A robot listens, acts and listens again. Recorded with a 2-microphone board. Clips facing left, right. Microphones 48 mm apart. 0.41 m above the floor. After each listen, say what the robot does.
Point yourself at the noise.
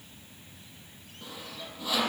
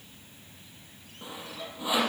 Turn 20° right.
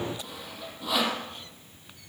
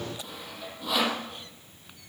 Found it: sawing, straight ahead.